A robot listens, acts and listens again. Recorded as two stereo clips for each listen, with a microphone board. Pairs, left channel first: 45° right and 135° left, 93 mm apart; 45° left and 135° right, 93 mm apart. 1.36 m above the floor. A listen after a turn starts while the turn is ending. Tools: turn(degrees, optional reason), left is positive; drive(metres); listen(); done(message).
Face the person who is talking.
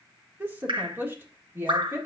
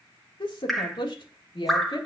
turn(degrees=65, reason="The woman speaking: 65° left.")
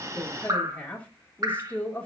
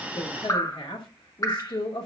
turn(degrees=25, reason="The woman speaking is now 25° left.")
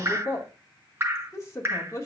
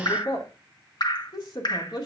turn(degrees=10, reason="The woman speaking is now 10° left.")
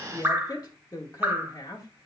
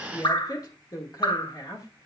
done("Facing the woman speaking.")